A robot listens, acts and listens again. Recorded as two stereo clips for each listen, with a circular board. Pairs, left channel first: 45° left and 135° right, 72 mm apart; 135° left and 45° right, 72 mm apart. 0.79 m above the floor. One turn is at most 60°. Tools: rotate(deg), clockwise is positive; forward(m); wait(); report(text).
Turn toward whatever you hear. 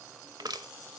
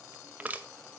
rotate(60)
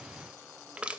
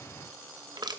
rotate(60)
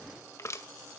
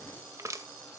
report("Found it: crushing, straight ahead.")